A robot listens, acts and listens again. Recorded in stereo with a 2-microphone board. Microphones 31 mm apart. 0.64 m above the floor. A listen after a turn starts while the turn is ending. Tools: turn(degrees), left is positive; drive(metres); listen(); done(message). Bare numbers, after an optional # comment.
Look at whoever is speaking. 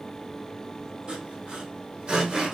listen()
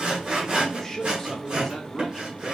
turn(30)
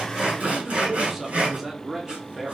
# So it is at 15° right.
turn(-15)
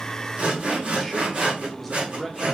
done("Facing the man speaking, 1 to 2 m away.")